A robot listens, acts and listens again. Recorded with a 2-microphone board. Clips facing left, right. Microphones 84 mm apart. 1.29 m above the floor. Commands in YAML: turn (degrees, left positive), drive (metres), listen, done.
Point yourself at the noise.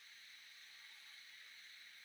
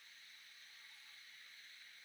listen: true
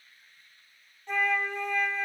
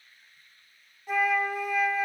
turn: -30
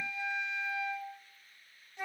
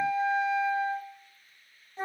turn: -145
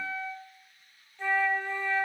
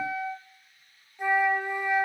turn: -15
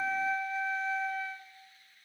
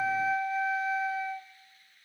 done: "Facing the flute, under 1 m away."